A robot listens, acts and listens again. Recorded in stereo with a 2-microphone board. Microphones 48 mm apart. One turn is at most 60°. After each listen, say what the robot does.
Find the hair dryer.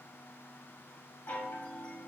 Keep listening.
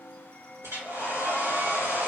Turn 60° right.
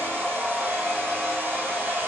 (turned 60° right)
Turn 50° right.
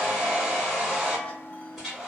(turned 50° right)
Found it: a hair dryer, straight ahead, 1 to 2 m away.